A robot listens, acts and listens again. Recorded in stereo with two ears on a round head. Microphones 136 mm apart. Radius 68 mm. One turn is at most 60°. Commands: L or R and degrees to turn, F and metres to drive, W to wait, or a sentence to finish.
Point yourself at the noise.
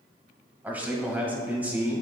R30
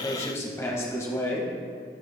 L20
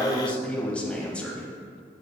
Facing the man speaking.